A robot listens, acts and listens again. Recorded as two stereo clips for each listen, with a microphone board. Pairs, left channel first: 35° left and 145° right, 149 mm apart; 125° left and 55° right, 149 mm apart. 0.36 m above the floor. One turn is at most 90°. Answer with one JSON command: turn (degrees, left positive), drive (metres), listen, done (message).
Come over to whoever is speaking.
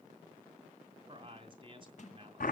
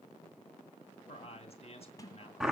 {"turn": 90}
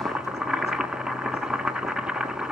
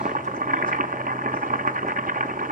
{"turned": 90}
{"turn": 75}
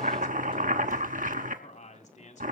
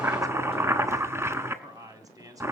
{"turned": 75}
{"drive": 1.0}
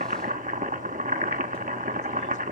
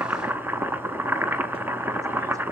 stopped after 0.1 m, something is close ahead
{"listen": true}
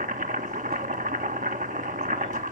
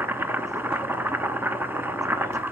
{"listen": true}
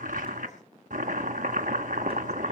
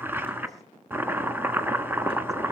{"done": "Facing where the man speaking came from. I can't hear it now. I did not reach it."}